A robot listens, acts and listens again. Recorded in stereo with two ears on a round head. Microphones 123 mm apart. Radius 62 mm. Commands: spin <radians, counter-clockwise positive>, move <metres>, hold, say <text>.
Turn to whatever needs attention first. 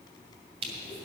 hold
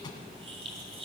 hold
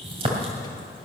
say I can't make out anything urgent, only crushing.